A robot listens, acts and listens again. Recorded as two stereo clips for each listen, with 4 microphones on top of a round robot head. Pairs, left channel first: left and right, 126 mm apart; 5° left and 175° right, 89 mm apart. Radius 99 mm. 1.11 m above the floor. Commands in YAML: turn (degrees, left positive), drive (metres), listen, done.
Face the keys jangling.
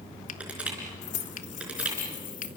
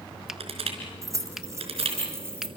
turn: 125
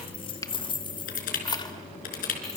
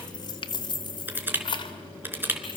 turn: 30
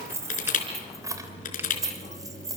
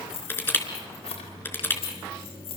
turn: -25
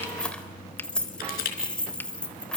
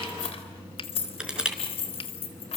done: "Facing the keys jangling, 2 to 4 m away."